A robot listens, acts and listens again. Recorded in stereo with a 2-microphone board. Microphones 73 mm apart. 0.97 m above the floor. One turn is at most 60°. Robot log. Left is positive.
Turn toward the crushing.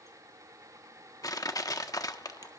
note: The crushing: about 60° left or 120° left.
cmd yaw +60
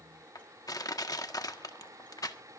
note: So it is at 60° left.
cmd yaw +60
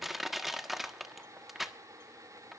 end: Found it: crushing, straight ahead, 1 to 2 m away.